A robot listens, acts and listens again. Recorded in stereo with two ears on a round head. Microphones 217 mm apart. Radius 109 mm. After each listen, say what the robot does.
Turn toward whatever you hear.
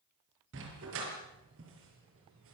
Turn 55° right.
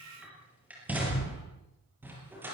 Turn 10° right.
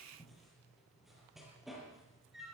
Facing the dog barking.